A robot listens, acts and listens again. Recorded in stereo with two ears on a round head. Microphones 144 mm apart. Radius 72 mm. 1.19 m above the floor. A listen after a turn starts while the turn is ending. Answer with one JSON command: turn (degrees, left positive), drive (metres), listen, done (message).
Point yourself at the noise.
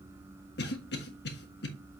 {"turn": 70}
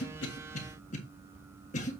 {"turn": 45}
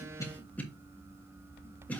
{"turn": 10}
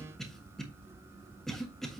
{"done": "Facing the cough, 1 to 2 m away."}